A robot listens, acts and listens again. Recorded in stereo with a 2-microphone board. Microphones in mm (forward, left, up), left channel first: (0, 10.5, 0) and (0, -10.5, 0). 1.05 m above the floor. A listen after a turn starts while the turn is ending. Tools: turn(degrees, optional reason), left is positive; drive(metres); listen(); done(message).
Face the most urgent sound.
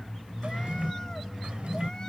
listen()
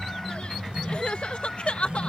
turn(degrees=65, reason="The crying: about 65° left or 115° left.")
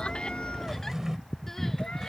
listen()
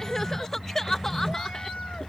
turn(degrees=20, reason="So it is at 20° left.")
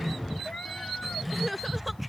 done("Facing the crying.")